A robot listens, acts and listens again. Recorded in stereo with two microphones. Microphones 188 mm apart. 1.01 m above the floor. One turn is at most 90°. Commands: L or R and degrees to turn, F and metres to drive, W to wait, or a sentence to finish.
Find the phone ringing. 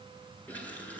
W
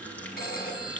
L50
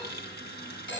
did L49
L80
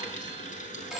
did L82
Found it: a phone ringing, straight ahead, over 4 m away.